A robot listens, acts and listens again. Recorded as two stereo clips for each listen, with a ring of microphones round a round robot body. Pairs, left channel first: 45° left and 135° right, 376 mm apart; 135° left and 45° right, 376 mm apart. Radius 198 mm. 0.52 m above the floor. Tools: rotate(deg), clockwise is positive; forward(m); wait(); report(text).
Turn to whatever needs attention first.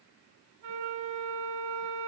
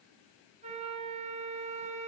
wait()
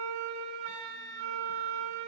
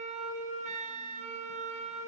wait()
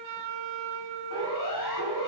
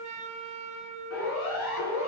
rotate(-80)
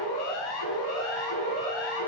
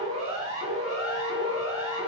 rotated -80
rotate(-30)
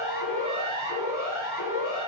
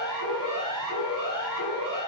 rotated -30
rotate(10)
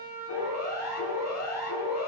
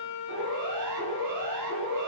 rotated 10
report("Facing the siren.")